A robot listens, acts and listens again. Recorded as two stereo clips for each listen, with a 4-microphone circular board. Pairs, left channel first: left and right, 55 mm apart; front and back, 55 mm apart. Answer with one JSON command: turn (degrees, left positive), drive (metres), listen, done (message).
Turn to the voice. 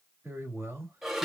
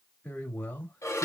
{"turn": -60}
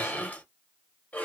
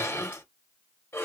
{"listen": true}
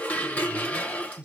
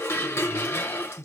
{"turn": -20}
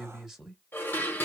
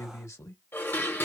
{"turn": -10}
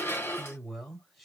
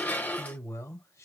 {"done": "Found it: a man speaking, straight ahead, 1 to 2 m away."}